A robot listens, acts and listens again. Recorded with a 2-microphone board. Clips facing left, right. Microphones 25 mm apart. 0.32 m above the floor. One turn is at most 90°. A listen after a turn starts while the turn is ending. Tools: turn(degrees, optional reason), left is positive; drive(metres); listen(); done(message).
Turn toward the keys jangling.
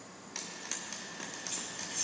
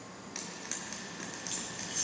turn(degrees=-45, reason="The keys jangling: about 45° right or 135° right.")
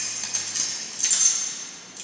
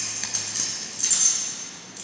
turn(degrees=10, reason="So it is at 10° left.")
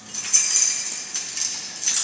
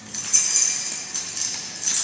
turn(degrees=20, reason="The keys jangling is now 20° left.")
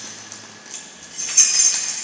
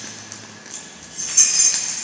done("Facing the keys jangling, 2 to 4 m away.")